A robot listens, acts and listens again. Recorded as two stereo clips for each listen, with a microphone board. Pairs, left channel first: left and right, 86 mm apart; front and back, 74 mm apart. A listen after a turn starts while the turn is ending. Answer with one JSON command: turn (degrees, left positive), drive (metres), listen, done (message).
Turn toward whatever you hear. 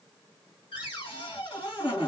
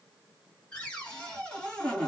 {"turn": 75}
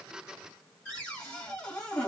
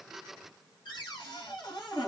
{"turn": 10}
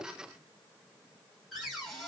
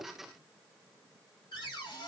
{"done": "Found it: a cupboard door, straight ahead, 1 to 2 m away."}